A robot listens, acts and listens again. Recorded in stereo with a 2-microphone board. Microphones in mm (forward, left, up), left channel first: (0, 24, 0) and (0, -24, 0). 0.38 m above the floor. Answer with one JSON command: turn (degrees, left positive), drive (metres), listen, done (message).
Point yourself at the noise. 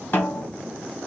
{"turn": 40}
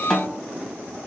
{"done": "Facing the snare drum, 2 to 4 m away."}